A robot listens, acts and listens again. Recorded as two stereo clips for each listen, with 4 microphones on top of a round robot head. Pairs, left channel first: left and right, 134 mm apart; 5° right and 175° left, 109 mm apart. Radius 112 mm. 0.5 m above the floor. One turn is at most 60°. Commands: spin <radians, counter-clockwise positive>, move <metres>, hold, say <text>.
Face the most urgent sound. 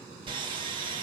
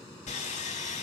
hold
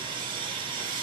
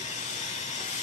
hold
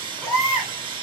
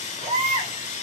spin 1.05
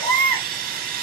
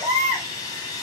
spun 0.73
spin 1.05
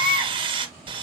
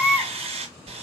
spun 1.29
spin 1.05
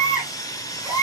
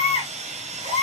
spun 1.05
say Found it: a baby crying, straight ahead, 2 to 4 m away.